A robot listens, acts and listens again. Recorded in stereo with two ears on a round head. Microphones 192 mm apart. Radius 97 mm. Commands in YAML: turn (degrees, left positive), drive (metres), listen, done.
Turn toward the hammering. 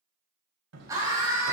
turn: -90
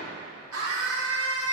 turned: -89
listen: true
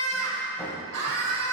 listen: true
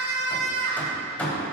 done: "Facing the hammering, 1 to 2 m away."